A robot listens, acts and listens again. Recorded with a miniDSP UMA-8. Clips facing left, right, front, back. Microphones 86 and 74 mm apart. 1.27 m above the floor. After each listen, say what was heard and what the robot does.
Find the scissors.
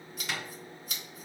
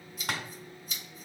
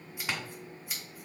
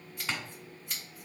The scissors: 85° left. Turn 85° left.
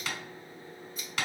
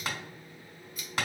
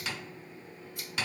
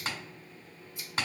The scissors is now 30° left. Turn 30° left.
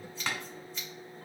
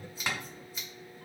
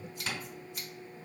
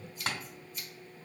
The scissors is now 10° right. Turn 10° right.
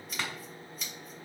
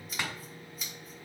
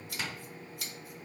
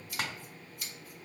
Facing the scissors, 1 to 2 m away.